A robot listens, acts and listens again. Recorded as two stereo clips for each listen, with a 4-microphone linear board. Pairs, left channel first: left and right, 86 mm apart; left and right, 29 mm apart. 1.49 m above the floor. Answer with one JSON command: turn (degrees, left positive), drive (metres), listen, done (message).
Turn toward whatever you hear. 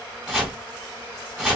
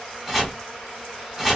{"turn": -30}
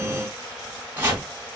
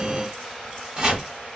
{"turn": -145}
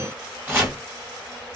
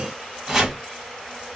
{"turn": -25}
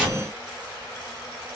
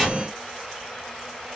{"done": "Found it: chopping, straight ahead."}